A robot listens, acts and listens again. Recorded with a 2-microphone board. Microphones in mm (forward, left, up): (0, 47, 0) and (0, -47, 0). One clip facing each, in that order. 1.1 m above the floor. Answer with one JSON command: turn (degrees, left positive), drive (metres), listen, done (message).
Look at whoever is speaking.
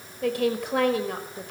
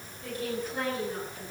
{"turn": 70}
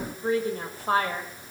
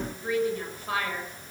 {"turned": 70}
{"turn": 40}
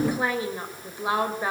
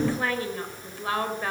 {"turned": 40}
{"turn": 15}
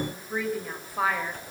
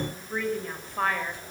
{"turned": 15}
{"done": "Facing the woman speaking."}